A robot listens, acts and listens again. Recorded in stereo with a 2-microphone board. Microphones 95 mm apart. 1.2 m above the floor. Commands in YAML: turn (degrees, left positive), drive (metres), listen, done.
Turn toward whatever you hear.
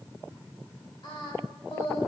turn: 65
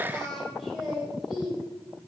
turn: -10
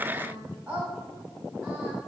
turn: -10
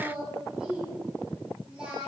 turn: -10
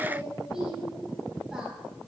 done: "Found it: singing, straight ahead."